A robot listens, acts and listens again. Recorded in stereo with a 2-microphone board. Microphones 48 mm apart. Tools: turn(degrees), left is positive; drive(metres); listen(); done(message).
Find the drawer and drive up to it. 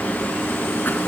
listen()
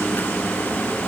listen()
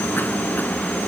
done("I can't make out a drawer to turn to.")